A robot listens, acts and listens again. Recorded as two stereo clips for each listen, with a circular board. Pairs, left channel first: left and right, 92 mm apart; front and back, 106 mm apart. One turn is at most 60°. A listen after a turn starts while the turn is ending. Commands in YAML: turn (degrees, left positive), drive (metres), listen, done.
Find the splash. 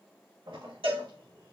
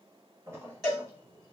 turn: -60
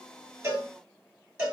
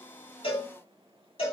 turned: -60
turn: -55
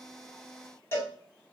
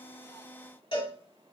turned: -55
done: "I heard a splash from this way, but can't make it out now."